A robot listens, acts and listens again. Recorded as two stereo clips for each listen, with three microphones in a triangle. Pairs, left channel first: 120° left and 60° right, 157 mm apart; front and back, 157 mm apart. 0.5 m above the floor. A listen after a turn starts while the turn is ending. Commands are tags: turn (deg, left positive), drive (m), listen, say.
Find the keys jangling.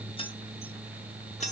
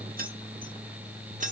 <turn deg="155"/>
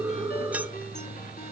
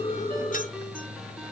<listen/>
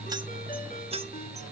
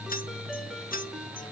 <turn deg="-10"/>
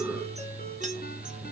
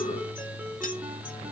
<listen/>
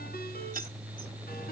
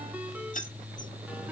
<turn deg="-35"/>
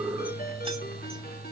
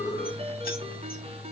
<listen/>
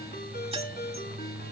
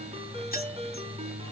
<listen/>
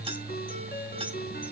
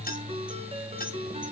<say>I heard keys jangling from this way, but can't make it out now.</say>